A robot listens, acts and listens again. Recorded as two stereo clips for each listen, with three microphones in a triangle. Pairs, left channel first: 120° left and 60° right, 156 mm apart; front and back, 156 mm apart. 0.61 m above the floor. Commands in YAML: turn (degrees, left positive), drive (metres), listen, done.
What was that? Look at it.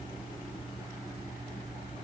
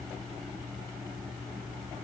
listen: true
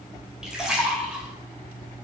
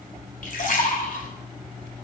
turn: 25
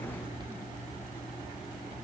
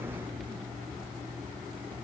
done: "I heard a splash from this way, but can't make it out now."